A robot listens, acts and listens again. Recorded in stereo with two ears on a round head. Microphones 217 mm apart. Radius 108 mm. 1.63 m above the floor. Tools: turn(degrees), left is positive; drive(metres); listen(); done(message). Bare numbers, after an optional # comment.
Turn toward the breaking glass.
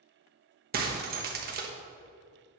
# The breaking glass: about 40° right or 140° right.
turn(-40)
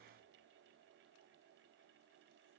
listen()
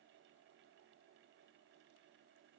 done("I heard breaking glass, but can't make it out now. It was about straight ahead or 100° right.")